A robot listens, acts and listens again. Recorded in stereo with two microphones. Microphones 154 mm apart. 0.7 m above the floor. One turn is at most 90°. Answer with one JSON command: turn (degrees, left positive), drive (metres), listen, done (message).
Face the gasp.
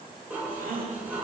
{"turn": -65}
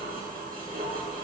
{"listen": true}
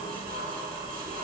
{"done": "I heard a gasp, but can't make it out now. It was about straight ahead or 50° right."}